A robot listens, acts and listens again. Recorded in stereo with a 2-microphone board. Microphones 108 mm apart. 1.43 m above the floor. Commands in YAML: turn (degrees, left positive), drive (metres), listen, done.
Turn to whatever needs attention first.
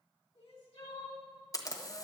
turn: 65
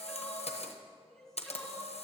done: "Found it: crying, straight ahead, 2 to 4 m away."